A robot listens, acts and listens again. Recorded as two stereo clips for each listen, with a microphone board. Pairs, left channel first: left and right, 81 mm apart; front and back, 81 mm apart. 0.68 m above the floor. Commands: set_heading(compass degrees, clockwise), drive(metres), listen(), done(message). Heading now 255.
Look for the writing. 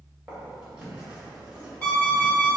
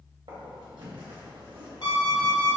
set_heading(60)
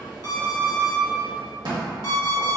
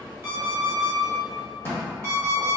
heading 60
set_heading(120)
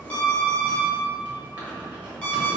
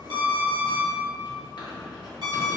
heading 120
set_heading(140)
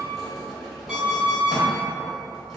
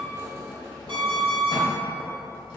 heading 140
done("Facing the writing, 1 to 2 m away.")